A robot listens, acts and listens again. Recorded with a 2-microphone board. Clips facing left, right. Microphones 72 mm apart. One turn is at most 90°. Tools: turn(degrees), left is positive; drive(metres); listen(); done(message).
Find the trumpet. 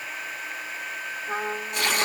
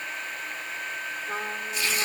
turn(degrees=30)
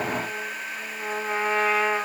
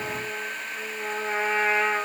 turn(degrees=-20)
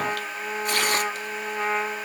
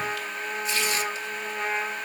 done("Facing the trumpet.")